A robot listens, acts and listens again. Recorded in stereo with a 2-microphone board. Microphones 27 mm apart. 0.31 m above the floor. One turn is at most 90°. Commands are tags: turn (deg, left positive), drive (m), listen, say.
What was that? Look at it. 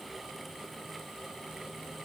<listen/>
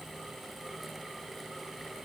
<listen/>
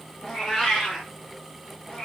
<turn deg="30"/>
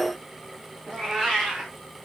<say>Found it: a cat meowing, straight ahead.</say>